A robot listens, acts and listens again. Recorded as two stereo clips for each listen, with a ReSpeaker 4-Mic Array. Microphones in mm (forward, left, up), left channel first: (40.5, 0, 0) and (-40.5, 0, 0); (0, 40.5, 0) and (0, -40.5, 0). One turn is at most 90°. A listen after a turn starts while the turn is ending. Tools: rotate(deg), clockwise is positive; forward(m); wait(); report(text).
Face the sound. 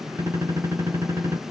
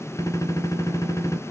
rotate(-90)
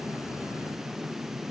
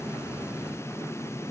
rotate(-40)
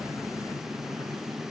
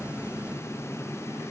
report("I heard a gunshot from this way, but can't make it out now.")